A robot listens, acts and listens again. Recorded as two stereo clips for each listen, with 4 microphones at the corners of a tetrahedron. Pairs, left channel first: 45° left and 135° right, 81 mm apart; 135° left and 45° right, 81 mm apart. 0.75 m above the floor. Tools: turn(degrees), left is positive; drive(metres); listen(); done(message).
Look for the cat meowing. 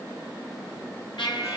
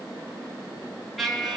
listen()
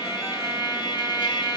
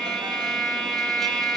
listen()
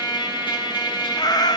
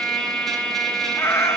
turn(degrees=80)
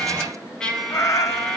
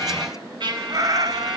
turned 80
done("Facing the cat meowing.")